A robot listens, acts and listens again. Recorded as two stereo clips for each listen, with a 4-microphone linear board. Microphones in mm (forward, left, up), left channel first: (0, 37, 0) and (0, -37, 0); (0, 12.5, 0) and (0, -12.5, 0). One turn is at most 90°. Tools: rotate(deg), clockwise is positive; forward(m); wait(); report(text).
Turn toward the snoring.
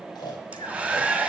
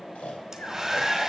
rotate(-75)
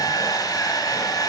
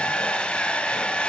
wait()
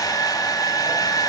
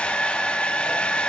wait()
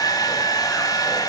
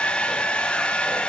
report("I heard snoring, but can't make it out now. It was about straight ahead or 30° left.")